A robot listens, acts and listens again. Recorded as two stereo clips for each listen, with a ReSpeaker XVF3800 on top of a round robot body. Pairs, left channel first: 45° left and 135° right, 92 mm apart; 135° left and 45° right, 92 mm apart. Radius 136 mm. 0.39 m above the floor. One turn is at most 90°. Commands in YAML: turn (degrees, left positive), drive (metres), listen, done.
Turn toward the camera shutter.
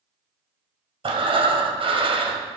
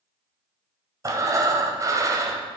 listen: true
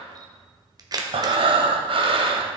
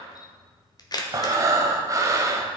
turn: 90
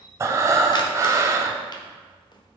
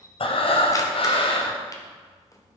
turn: 90
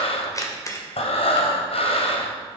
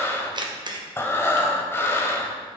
turn: -10
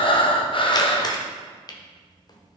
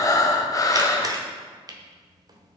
done: "Found it: a camera shutter, straight ahead, 1 to 2 m away."